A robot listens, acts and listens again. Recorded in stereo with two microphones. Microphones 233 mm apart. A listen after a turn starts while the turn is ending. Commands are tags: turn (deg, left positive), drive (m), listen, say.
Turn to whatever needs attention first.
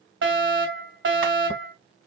<turn deg="-55"/>
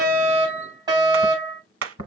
<turn deg="-20"/>
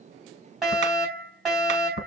<say>Facing the fire alarm.</say>